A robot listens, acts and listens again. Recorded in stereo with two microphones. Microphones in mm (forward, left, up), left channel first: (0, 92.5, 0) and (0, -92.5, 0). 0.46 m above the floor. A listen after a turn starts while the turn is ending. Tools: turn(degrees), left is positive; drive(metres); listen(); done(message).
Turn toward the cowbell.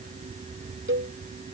turn(degrees=-90)
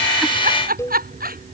turn(degrees=15)
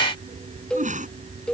done("Facing the cowbell.")